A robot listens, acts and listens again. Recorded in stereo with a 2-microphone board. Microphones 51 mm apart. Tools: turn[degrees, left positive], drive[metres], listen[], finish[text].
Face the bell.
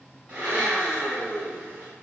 Action: listen[]
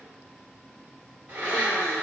Action: listen[]
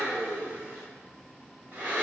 Action: finish[I can't make out a bell to turn to.]